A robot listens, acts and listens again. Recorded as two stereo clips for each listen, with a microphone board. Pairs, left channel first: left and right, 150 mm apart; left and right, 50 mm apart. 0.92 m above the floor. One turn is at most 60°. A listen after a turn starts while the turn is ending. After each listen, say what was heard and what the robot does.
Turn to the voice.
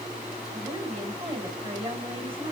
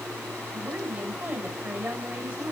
The woman speaking: about 35° right or 145° right. Turn 35° right.
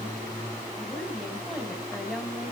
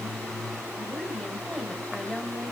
Facing the woman speaking, over 4 m away.